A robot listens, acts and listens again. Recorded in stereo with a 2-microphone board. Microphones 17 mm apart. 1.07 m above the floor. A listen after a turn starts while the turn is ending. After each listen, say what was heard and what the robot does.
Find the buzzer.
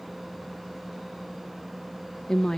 Keep listening.
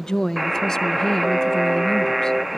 The buzzer: about 20° right or 160° right. Turn 20° right.
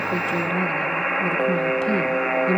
Found it: a buzzer, straight ahead.